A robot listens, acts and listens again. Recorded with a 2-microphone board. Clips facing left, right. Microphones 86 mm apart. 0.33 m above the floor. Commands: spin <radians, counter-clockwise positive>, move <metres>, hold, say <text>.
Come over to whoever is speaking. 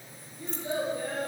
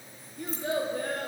spin -1.57
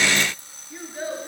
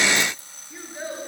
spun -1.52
move 1.0
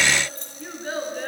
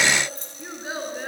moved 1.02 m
spin -0.17
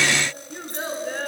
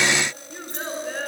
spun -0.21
move 1.0
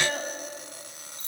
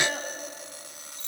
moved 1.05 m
move 1.0
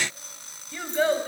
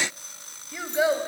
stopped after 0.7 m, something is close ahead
spin -0.26
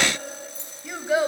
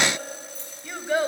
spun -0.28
say I am next to the child speaking.